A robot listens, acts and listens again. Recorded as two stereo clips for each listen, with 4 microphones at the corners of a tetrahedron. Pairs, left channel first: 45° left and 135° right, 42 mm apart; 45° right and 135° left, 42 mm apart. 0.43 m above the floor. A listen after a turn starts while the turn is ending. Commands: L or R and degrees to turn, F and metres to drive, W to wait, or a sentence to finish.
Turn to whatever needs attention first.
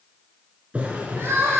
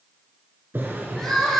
R125
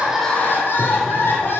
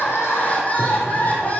L10
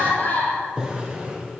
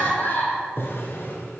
Found it: crying, straight ahead, 2 to 4 m away.